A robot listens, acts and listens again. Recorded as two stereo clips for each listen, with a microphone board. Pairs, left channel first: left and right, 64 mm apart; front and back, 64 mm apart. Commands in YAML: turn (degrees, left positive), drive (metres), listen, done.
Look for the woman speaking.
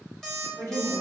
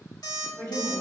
turn: 45
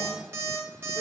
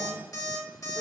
listen: true
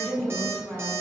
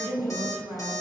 turn: -10
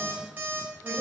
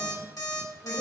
listen: true
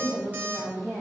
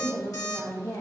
turn: -10
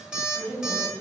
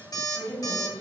done: "Found it: a woman speaking, straight ahead, 2 to 4 m away."